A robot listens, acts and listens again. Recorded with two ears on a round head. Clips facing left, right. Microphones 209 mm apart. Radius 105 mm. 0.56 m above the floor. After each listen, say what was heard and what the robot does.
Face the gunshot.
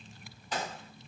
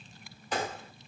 The gunshot: about 45° right or 135° right. Turn 45° right.
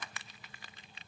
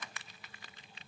Keep listening.
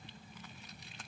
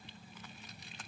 I heard a gunshot, but can't make it out now. It was about straight ahead or 90° right.